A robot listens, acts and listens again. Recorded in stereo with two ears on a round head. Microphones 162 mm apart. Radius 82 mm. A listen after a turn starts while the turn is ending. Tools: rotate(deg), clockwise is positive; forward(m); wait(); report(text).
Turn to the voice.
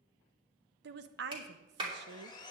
rotate(65)
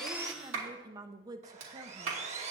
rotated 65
rotate(20)
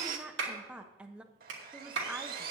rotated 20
report("Found it: a woman speaking, straight ahead.")